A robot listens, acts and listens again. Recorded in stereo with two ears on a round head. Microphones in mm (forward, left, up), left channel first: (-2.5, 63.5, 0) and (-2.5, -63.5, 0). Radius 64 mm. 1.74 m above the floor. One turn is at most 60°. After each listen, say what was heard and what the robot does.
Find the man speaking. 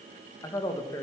The man speaking: about 25° left or 155° left. Turn 25° left.
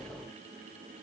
Keep listening.
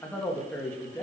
Turn 30° left.
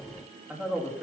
Found it: a man speaking, straight ahead, 2 to 4 m away.